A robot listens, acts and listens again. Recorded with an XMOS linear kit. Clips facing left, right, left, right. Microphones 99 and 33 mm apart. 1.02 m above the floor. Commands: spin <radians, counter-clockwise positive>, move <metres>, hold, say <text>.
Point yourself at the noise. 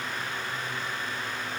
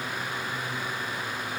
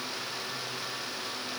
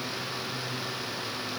hold
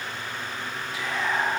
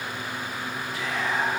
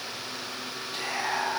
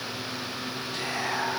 spin 0.52
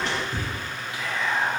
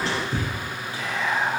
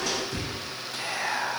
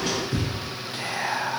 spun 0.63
spin -0.61
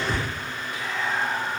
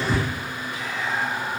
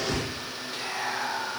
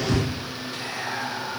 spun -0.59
say Found it: whispering, straight ahead, 1 to 2 m away.